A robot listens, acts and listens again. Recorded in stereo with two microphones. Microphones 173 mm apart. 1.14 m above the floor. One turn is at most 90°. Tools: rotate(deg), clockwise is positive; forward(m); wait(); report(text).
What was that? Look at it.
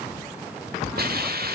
rotate(65)
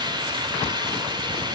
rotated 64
rotate(30)
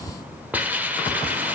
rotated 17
rotate(10)
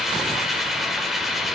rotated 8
report("Facing the hiss.")